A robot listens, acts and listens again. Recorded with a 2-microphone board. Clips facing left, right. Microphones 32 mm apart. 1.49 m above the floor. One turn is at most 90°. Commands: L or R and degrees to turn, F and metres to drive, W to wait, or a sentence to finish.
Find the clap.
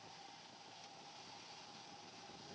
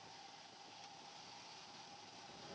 W
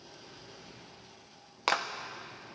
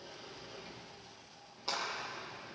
L65
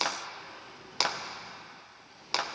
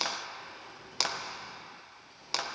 L10
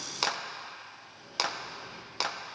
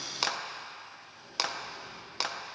Found it: a clap, straight ahead, under 1 m away.